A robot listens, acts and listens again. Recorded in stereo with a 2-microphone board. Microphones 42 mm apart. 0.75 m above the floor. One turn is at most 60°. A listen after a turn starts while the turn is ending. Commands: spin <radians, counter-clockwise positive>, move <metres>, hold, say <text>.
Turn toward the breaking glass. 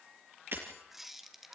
spin -1.05
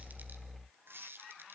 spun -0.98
hold
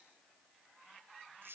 say I heard breaking glass, but can't make it out now. It was about 5° right or 65° right.